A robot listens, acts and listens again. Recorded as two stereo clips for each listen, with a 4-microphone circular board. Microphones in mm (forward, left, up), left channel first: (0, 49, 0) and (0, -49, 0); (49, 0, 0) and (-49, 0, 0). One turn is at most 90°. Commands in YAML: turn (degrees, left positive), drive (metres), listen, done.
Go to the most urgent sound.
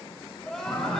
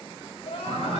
drive: 1.0
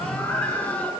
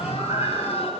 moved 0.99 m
listen: true
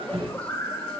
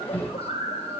listen: true
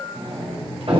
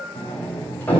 done: "I heard crying from this way, but can't make it out now. I did not reach it."